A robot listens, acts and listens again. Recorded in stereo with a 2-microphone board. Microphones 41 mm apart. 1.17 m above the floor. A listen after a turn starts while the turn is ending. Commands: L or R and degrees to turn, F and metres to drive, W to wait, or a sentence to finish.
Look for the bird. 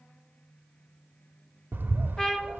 R50
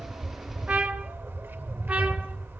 R75
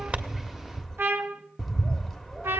Facing the bird.